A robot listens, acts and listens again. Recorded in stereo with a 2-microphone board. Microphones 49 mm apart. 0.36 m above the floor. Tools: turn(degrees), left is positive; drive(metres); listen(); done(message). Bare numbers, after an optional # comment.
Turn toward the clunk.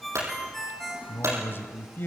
# The clunk: about 75° right or 105° right.
turn(-75)
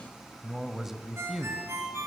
listen()
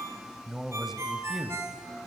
done("I heard a clunk, but can't make it out now. It was about straight ahead or 30° right.")